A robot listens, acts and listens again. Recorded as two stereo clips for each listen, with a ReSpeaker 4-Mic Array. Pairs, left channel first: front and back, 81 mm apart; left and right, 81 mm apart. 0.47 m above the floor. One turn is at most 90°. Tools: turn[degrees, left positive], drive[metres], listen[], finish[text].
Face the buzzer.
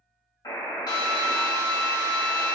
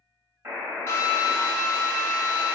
Thought: The buzzer: 40° right.
Action: turn[-40]
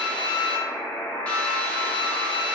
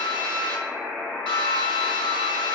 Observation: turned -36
Action: finish[Facing the buzzer.]